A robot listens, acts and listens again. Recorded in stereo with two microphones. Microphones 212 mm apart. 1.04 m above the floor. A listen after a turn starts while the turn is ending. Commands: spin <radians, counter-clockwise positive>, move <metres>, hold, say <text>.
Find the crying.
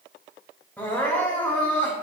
spin 0.52
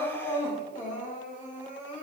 spin 2.44
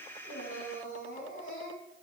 spin 1.13
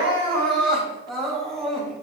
say Found it: crying, straight ahead.